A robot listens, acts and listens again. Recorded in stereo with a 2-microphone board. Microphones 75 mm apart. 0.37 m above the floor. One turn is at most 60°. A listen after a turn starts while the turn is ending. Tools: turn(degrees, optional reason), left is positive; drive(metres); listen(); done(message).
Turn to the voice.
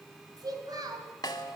turn(degrees=-60, reason="The child speaking: about 60° right or 120° right.")
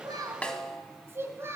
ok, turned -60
turn(degrees=-40, reason="So it is at 40° right.")
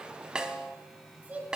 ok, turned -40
turn(degrees=-20, reason="The child speaking is now 20° right.")
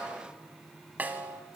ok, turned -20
listen()
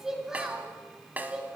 turn(degrees=-10, reason="The child speaking is now 10° right.")
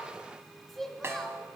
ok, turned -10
done("Found it: a child speaking, straight ahead.")